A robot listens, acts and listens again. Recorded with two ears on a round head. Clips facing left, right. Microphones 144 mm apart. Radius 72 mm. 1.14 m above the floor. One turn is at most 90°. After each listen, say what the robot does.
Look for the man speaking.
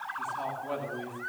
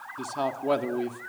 Turn 75° right.
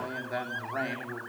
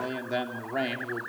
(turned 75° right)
Turn 35° right.
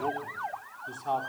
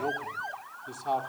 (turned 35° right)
Turn 10° right.
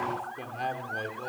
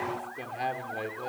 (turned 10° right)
Facing the man speaking, over 4 m away.